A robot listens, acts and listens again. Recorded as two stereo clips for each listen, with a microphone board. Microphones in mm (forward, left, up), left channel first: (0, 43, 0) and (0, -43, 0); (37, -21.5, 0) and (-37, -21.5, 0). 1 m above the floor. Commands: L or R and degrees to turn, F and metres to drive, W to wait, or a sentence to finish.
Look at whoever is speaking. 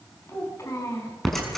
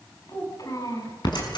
L35
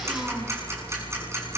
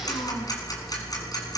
W
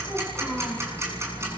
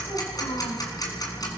Facing the child speaking.